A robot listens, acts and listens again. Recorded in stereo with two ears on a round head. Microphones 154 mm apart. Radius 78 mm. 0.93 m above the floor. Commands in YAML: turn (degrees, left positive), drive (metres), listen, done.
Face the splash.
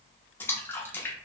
turn: 30
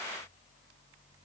listen: true
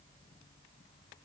done: "I heard a splash, but can't make it out now. It was about 20° right or 140° left."